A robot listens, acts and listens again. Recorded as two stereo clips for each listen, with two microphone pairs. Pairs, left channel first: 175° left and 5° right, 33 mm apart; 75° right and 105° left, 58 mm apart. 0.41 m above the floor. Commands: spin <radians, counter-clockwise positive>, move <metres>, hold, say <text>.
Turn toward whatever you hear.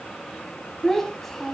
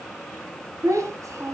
spin 1.48
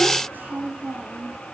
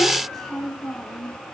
say Facing the child speaking, 2 to 4 m away.